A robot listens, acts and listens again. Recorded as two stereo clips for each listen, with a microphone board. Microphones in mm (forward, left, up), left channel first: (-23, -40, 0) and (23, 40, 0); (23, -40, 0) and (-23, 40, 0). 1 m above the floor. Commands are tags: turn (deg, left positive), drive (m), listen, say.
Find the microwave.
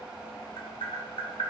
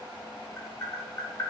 <listen/>
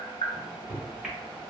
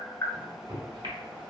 <turn deg="140"/>
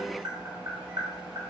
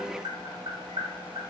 <listen/>
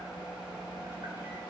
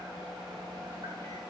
<listen/>
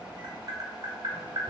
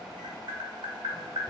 <say>Facing where the microwave came from. I can't hear it now.</say>